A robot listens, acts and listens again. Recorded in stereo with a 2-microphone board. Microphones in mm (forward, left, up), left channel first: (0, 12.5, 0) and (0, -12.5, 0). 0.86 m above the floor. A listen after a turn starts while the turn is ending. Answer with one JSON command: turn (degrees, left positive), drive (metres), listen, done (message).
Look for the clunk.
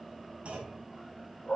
{"turn": -70}
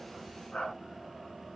{"listen": true}
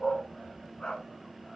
{"done": "I heard a clunk, but can't make it out now. It was about straight ahead or 40° right."}